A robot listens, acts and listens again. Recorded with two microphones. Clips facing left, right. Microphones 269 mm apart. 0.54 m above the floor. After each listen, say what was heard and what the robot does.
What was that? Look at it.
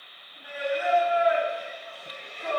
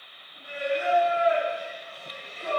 The singing: about 35° right or 145° right. Turn 35° right.
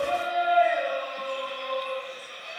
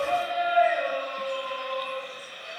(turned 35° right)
So it is at 10° right. Turn 10° right.
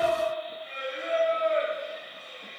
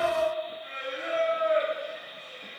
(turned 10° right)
Facing the singing.